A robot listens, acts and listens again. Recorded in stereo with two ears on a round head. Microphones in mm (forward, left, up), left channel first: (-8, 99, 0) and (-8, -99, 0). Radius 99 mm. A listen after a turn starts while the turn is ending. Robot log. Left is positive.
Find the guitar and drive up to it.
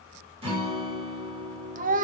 note: The guitar: about 25° right or 155° right.
cmd yaw -25
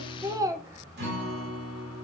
note: So it is at 130° right.
cmd yaw -130
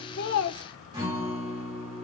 note: The guitar is now 20° right.
cmd yaw -20
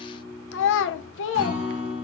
cmd fwd 1.0
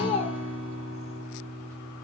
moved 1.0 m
cmd fwd 1.0
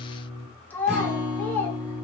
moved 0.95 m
cmd fwd 1.0
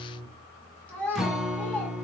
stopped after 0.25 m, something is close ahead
end: Arrived at the guitar, straight ahead.